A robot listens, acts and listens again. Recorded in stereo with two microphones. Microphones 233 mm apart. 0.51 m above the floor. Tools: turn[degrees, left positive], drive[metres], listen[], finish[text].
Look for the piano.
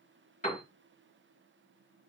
Thought: The piano: about 35° left or 145° left.
Action: turn[35]
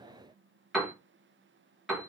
Action: finish[Found it: a piano, straight ahead.]